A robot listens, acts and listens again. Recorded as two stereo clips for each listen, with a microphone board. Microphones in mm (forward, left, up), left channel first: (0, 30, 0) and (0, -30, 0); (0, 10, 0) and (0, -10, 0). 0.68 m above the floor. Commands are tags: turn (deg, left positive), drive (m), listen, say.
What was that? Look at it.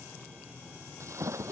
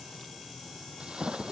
<turn deg="-50"/>
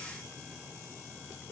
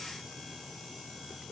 <listen/>
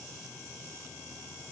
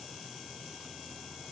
<say>I heard a splash, but can't make it out now. It was about straight ahead or 80° right.</say>